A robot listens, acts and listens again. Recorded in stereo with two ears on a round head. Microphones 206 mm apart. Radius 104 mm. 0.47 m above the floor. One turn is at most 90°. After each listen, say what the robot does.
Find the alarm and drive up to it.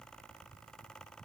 Keep listening.
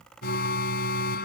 Turn 45° left.
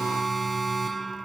Drive 1.0 m forward.
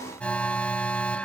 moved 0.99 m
Drive 1.0 m forward.
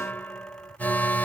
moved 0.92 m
Turn 10° left.
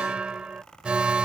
Drive 1.0 m forward.
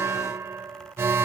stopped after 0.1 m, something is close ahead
Turn 10° right.
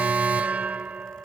Arrived at the alarm, straight ahead.